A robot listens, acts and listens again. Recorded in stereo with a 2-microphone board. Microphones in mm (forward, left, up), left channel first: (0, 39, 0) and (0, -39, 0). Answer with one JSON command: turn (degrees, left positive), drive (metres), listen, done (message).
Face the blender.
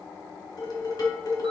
{"listen": true}
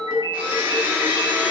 {"turn": -25}
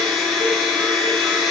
{"done": "Facing the blender, 1 to 2 m away."}